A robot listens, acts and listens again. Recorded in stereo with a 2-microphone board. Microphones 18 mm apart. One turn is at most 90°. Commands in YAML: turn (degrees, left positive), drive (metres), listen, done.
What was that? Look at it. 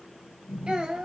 turn: -90
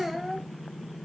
done: "Facing the child speaking, 1 to 2 m away."